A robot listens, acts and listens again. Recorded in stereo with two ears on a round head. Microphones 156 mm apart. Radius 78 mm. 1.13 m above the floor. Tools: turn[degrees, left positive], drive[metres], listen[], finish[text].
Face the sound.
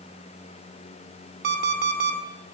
Thought: The alarm clock: about 60° right or 120° right.
Action: turn[-60]
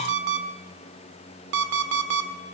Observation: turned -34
Thought: So it is at 85° right.
Action: turn[-85]
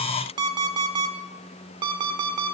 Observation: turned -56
Thought: The alarm clock is now 25° right.
Action: turn[-25]
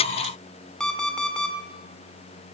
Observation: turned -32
Action: finish[Found it: an alarm clock, straight ahead, 1 to 2 m away.]